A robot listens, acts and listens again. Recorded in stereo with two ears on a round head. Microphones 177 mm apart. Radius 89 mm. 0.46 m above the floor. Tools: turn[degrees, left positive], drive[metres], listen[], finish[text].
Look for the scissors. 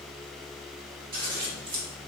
Thought: The scissors: about 40° right or 140° right.
Action: turn[-40]
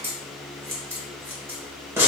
Thought: So it is at 15° right.
Action: turn[-15]
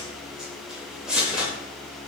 Action: finish[Facing the scissors.]